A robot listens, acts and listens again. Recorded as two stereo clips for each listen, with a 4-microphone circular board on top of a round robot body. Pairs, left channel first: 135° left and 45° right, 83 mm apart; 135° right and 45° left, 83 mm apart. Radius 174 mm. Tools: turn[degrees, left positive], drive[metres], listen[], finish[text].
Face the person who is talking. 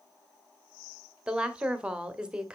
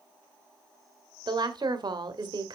Thought: The woman speaking: 30° left.
Action: turn[30]
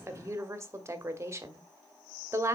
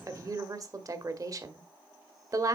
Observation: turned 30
Action: finish[Found it: a woman speaking, straight ahead.]